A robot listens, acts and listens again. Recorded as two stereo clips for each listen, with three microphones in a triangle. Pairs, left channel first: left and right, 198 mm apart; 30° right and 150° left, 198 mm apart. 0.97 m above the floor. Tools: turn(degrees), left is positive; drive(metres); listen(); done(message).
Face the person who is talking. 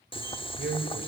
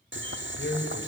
turn(degrees=-55)
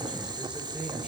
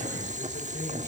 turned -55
listen()
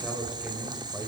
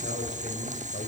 done("Facing the man speaking, over 4 m away.")